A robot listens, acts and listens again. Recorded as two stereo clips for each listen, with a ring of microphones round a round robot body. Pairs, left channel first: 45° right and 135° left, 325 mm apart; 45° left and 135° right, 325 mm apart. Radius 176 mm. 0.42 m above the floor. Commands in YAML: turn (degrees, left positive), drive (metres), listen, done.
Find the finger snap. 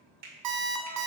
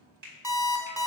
turn: -165
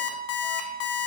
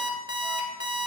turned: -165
listen: true
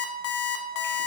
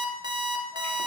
listen: true
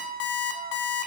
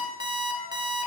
done: "I heard a finger snap from this way, but can't make it out now."